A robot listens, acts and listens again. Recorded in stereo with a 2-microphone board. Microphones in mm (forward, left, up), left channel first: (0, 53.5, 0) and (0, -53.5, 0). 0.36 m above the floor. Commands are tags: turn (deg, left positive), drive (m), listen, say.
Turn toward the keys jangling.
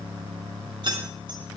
<turn deg="-50"/>
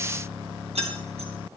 <turn deg="-80"/>
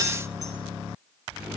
<listen/>
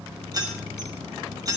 <turn deg="-35"/>
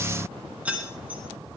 <turn deg="-15"/>
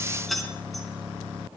<say>Facing the keys jangling.</say>